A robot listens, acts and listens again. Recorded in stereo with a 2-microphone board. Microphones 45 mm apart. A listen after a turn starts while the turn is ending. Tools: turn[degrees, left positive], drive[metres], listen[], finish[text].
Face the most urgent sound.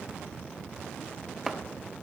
Action: listen[]
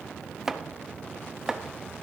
Action: listen[]
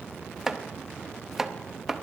Action: finish[I can't make out anything urgent, only chopping.]